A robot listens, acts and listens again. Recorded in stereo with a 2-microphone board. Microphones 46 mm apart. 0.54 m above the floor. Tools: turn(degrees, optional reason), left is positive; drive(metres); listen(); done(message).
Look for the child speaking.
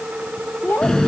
turn(degrees=40, reason="The child speaking: about 40° left or 140° left.")
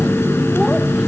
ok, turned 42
listen()
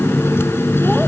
listen()
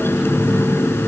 done("I heard a child speaking, but can't make it out now. It was about 5° right or 100° left.")